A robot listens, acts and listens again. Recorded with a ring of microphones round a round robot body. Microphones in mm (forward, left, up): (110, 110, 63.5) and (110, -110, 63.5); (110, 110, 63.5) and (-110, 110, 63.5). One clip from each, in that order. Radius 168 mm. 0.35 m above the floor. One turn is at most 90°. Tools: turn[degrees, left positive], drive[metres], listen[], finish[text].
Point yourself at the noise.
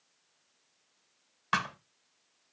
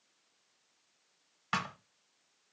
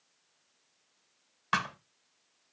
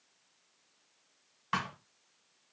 Thought: The thud: 25° left.
Action: turn[25]
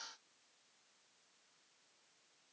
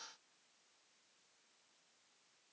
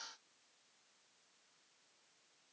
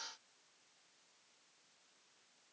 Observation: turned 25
Action: finish[I heard a thud from this way, but can't make it out now.]